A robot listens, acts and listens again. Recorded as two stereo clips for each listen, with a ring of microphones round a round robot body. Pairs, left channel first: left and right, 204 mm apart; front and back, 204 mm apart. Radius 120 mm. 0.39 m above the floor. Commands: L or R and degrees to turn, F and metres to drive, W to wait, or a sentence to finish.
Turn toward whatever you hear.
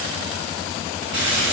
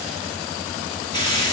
R65
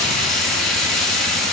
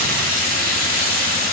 Found it: frying, straight ahead, 2 to 4 m away.